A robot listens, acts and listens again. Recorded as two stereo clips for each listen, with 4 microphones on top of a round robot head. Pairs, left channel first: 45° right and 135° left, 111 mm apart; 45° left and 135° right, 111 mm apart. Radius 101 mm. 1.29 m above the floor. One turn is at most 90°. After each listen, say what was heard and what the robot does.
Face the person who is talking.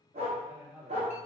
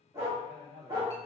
The man speaking: 145° right. Turn 90° right.
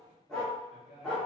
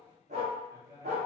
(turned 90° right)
The man speaking is now 75° right. Turn 75° right.
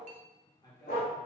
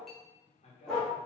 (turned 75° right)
The man speaking is now 10° left. Turn 10° left.
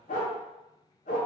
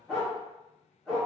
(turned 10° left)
Keep listening.
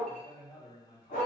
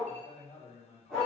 Facing the man speaking.